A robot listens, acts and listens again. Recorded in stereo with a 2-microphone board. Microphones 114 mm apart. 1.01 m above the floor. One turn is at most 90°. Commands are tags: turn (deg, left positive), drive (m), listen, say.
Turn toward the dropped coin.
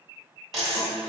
<turn deg="30"/>
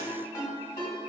<listen/>
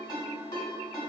<say>I heard a dropped coin, but can't make it out now. It was about 30° right or 150° left.</say>